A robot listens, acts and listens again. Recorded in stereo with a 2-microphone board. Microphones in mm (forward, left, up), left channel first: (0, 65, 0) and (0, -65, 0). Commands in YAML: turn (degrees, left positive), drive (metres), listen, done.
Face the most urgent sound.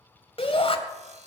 turn: 45
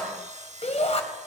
turn: 75
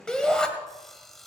done: "Facing the shout, 2 to 4 m away."